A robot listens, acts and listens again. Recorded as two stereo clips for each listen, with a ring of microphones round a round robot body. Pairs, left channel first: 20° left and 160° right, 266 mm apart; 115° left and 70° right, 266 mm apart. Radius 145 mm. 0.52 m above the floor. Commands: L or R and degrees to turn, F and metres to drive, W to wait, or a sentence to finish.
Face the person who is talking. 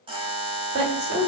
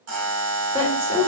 R135
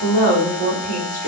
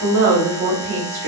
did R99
R35
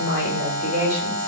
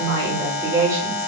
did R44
L10
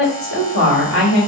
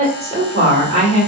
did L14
Facing the woman speaking, 1 to 2 m away.